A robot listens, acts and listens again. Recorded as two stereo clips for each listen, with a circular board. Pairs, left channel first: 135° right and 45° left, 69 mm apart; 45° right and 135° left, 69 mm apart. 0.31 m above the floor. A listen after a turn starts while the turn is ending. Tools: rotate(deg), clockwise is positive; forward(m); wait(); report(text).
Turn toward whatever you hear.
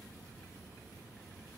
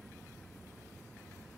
wait()
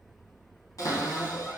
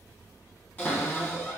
rotate(105)
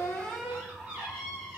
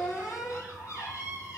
rotate(10)
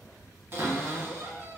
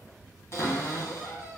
report("Facing the cupboard door, 1 to 2 m away.")